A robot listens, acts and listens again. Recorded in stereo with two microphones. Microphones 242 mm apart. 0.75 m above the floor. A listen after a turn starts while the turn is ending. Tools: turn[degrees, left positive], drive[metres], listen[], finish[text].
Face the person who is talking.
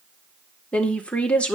Action: turn[30]
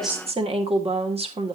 Thought: So it is at 25° right.
Action: turn[-25]
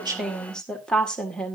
Action: finish[Found it: a woman speaking, straight ahead, 1 to 2 m away.]